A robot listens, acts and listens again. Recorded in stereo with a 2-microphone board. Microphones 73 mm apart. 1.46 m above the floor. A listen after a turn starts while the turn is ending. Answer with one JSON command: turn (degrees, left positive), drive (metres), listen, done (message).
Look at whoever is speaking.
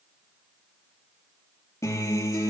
{"listen": true}
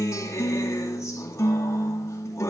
{"listen": true}
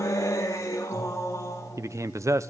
{"turn": -45}
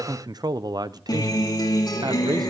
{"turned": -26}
{"turn": -110}
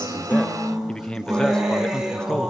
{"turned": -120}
{"turn": 10}
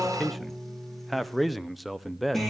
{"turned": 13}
{"done": "Found it: a man speaking, straight ahead."}